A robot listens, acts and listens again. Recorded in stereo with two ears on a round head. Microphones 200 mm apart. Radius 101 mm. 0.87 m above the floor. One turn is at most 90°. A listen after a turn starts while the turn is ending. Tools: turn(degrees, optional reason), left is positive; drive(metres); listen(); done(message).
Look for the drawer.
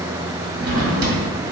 turn(degrees=-70, reason="The drawer: about 70° right or 110° right.")
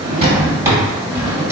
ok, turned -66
turn(degrees=-15, reason="So it is at 15° right.")
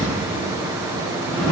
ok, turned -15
done("Found it: a drawer, straight ahead.")